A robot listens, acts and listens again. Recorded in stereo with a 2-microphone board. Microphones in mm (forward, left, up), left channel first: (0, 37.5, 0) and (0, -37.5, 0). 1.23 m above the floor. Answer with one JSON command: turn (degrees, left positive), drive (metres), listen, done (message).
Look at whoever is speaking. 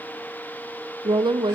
{"turn": -90}
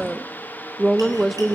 {"done": "Found it: a woman speaking, straight ahead."}